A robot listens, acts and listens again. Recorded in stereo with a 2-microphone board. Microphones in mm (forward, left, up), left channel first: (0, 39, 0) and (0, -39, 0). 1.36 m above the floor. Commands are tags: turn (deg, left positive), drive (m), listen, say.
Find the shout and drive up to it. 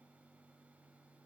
<listen/>
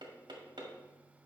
<listen/>
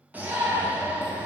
<turn deg="-20"/>
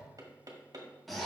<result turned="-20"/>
<drive m="1.0"/>
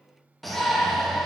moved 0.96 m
<drive m="1.0"/>
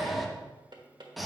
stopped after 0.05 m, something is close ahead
<say>I am next to the shout.</say>